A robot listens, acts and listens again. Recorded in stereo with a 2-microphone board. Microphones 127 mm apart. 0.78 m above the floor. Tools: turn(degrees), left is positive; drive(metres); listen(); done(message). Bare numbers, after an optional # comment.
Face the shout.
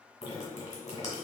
listen()
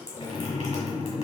listen()
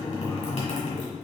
done("I can't make out a shout, only dripping.")